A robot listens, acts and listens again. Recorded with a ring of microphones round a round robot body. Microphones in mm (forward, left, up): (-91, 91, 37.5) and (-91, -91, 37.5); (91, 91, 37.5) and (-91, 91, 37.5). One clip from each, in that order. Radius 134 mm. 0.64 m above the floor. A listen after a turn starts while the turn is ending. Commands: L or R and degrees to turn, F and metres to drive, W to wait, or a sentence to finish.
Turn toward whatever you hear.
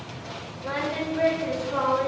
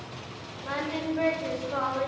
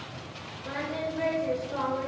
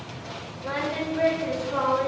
R145
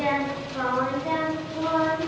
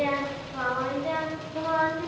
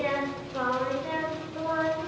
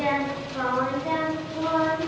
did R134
R60
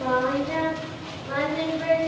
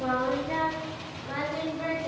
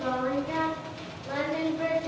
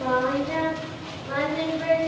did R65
R25
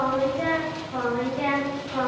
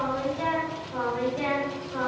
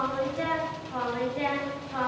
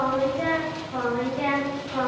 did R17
R10
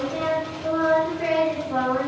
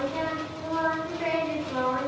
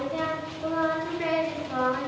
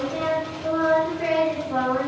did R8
Facing the singing.